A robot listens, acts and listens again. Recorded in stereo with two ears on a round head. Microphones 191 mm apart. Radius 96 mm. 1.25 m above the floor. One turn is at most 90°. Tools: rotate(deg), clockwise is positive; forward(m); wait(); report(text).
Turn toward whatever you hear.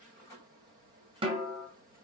rotate(25)
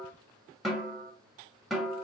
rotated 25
report("Facing the snare drum, under 1 m away.")